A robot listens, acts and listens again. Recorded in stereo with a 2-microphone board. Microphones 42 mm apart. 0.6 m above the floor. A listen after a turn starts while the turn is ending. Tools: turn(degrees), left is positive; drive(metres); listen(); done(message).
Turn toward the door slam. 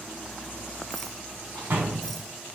turn(degrees=-70)
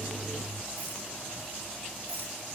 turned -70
listen()
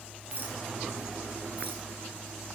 done("I heard a door slam, but can't make it out now. It was about straight ahead or 40° right.")